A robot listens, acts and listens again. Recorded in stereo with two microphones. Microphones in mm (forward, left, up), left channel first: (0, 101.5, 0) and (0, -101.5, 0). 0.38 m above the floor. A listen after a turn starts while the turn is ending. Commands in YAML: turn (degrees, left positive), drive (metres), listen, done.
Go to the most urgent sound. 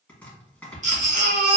turn: -40
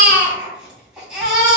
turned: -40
drive: 1.0
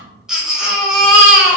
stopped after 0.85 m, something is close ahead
done: "Arrived at the baby crying, straight ahead."